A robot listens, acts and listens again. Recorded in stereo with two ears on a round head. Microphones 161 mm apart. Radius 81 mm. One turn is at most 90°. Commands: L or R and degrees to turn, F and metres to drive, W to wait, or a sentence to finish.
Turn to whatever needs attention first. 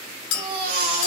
R90
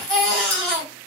Found it: a baby crying, straight ahead.